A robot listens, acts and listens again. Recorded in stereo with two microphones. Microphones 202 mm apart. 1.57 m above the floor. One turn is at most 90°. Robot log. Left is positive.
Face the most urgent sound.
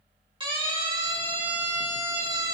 note: The siren: about 25° right or 155° right.
cmd yaw -25
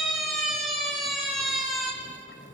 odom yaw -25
end: Found it: a siren, straight ahead.